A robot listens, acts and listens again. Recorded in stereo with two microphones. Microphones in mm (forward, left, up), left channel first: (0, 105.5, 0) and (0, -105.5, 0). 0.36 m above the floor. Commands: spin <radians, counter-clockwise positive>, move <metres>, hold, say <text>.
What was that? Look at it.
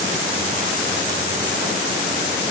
hold
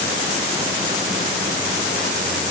hold
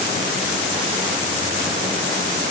say I can't make out anything to turn to.